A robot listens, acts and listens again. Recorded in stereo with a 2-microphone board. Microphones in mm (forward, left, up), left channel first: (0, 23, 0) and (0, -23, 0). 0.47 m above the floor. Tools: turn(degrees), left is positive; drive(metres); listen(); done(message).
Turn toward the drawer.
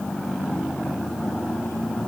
listen()
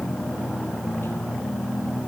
listen()
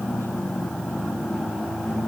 done("I can't make out a drawer.")